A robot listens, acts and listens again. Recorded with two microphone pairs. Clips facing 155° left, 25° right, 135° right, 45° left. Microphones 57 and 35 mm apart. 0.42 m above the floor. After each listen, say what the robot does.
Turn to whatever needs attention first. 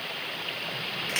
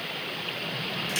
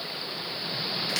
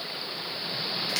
Keep listening.
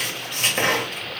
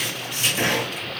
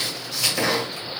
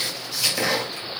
Keep listening.
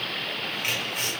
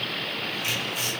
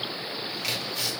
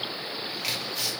I can't make out anything urgent to turn to.